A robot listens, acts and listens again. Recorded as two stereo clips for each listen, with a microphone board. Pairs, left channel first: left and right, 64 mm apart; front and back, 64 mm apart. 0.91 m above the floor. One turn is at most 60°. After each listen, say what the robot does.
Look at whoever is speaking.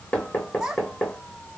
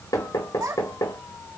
Turn 60° right.
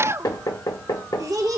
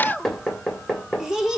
Turn 60° right.
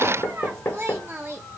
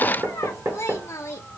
Turn 40° right.
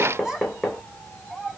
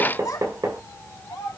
Turn 10° right.
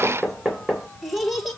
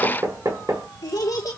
Facing the child speaking.